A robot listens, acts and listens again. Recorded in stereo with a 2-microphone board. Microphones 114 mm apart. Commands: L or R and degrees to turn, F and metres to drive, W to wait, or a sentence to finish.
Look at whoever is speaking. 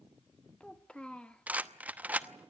L30
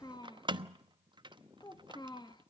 L140
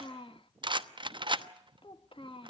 L50
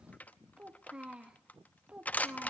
R10
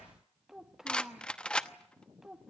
Facing the child speaking, 1 to 2 m away.